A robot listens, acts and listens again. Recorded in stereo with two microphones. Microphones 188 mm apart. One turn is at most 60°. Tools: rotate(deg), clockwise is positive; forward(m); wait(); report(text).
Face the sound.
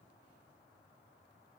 wait()
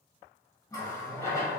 rotate(-30)
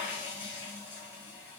rotate(15)
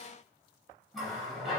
report("Found it: a running tap, straight ahead.")